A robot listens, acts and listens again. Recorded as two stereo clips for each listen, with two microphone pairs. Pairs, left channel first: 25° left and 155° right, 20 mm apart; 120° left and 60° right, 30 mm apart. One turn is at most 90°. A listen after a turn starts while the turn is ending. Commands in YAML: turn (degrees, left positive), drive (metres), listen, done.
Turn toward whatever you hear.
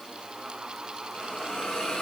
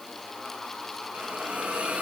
turn: -20
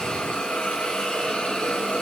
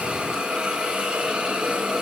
done: "Facing the hiss, over 4 m away."